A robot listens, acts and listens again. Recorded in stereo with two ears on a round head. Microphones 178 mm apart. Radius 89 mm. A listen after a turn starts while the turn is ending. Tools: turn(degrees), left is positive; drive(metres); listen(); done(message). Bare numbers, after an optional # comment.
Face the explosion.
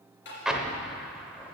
turn(-30)
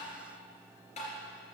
listen()
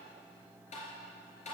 done("I heard an explosion, but can't make it out now. It was about 25° left or 145° right.")